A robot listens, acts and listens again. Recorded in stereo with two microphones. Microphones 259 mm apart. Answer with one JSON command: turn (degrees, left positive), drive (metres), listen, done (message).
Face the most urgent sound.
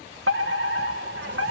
{"turn": -55}
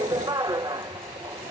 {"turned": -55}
{"turn": -20}
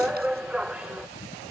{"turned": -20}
{"done": "Found it: a fire alarm, straight ahead."}